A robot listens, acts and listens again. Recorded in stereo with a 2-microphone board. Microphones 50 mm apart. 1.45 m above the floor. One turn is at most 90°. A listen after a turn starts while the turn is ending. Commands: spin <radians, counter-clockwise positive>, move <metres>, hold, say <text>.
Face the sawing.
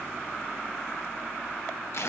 hold
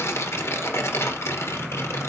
hold
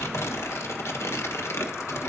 say I can't make out sawing, only tearing paper.